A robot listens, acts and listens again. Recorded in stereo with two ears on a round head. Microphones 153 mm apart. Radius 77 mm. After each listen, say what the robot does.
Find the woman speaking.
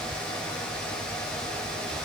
Keep listening.
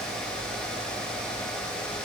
Keep listening.
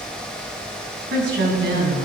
Turn 70° right.
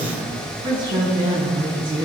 Turn 25° right.
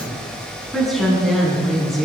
Found it: a woman speaking, straight ahead.